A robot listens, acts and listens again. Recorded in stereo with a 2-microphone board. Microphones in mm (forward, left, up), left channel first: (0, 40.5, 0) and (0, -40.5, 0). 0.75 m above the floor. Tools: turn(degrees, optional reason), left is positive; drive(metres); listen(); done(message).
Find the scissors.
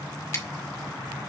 turn(degrees=35, reason="The scissors: about 35° left or 145° left.")
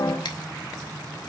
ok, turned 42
listen()
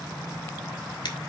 turn(degrees=100, reason="So it is at 100° left.")
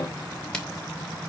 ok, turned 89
turn(degrees=15, reason="The scissors is now 15° left.")
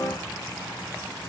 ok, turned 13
listen()
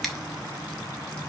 done("Found it: scissors, straight ahead, 1 to 2 m away.")